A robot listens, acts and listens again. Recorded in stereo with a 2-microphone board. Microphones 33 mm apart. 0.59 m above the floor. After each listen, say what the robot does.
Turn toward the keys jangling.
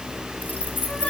Turn 70° left.
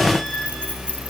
Turn 40° left.
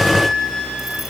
Keep listening.
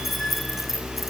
Turn 10° right.
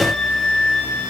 Keep listening.
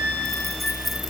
Keep listening.
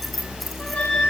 Facing the keys jangling.